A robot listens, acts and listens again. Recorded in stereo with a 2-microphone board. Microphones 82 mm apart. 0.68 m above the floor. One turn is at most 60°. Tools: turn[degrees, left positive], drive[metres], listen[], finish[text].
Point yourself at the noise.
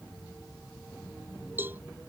Thought: The cowbell: about 25° right or 155° right.
Action: turn[-25]
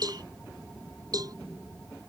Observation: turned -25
Thought: So it is at 130° right.
Action: turn[-60]
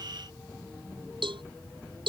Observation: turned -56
Thought: The cowbell is now 75° right.
Action: turn[-60]
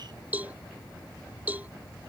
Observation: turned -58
Thought: The cowbell is now 20° right.
Action: turn[-20]
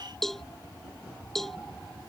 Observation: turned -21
Action: finish[Facing the cowbell.]